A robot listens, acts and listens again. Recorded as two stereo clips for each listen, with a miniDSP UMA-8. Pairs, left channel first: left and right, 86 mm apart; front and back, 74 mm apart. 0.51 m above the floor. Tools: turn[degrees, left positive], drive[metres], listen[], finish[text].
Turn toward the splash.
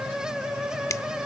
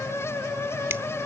Action: listen[]
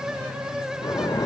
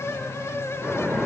Thought: The splash: 100° left.
Action: turn[100]
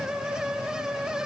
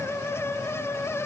Action: finish[I heard a splash from this way, but can't make it out now.]